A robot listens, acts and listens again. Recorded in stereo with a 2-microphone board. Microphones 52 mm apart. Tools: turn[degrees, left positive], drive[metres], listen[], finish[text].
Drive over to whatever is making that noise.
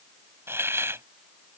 Thought: The hiss: about 55° right or 125° right.
Action: turn[-55]
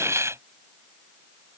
Thought: So it is at 70° right.
Action: turn[-70]
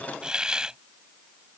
Thought: The hiss is now 15° right.
Action: turn[-15]
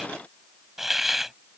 Action: drive[1.0]
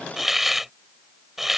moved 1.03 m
Action: drive[1.0]
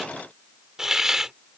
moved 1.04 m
Thought: The hiss is now 10° right.
Action: turn[-10]
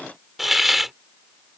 Action: drive[1.0]
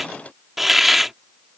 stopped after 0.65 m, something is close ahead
Action: finish[Arrived at the hiss, straight ahead.]